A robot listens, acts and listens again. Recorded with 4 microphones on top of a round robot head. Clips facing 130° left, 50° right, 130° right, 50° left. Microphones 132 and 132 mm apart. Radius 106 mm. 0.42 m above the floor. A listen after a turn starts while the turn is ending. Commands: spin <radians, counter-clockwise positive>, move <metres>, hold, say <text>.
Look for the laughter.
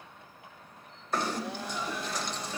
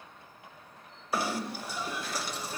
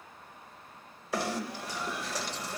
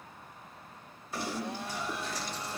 spin -1.66
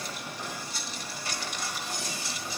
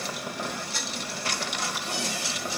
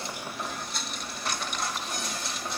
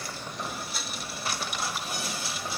hold
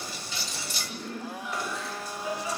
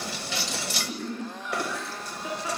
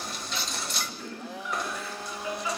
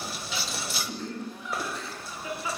spin -0.26
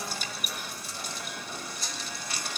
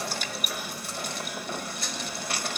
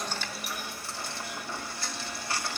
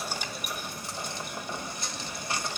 hold
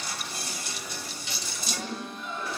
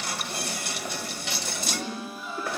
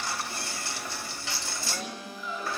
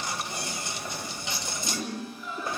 say Facing the laughter.